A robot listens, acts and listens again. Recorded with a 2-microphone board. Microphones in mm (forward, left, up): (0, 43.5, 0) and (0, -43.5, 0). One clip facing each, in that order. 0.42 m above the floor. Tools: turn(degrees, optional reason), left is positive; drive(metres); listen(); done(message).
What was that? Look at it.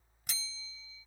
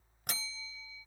turn(degrees=-60, reason="The bell: about 60° right or 120° right.")
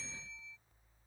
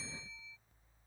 done("Facing the bell.")